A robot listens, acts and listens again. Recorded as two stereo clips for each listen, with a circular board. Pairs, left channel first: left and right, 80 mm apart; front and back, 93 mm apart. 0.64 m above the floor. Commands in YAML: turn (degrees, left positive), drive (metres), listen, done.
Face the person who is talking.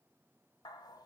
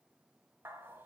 listen: true
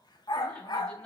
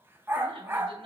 turn: 160
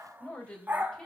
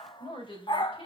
turn: 10
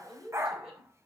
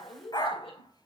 done: "Facing the woman speaking."